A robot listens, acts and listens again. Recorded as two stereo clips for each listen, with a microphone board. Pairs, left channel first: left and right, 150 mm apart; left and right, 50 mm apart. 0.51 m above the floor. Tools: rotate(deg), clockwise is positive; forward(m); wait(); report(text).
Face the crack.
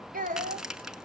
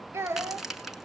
rotate(30)
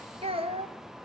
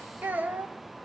wait()
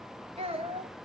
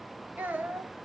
report("I heard a crack, but can't make it out now. It was about 25° left or 145° right.")